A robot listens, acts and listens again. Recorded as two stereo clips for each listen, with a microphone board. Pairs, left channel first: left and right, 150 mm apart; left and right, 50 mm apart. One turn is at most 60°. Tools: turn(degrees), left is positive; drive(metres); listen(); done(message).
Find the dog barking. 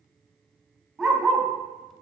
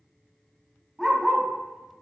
turn(degrees=-30)
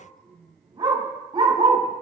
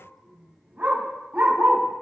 turn(degrees=-60)
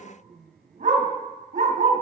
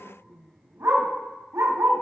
turn(degrees=-60)
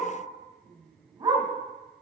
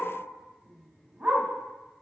turn(degrees=-35)
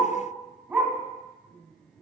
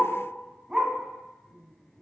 turn(degrees=-10)
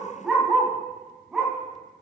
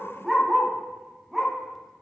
done("Found it: a dog barking, straight ahead.")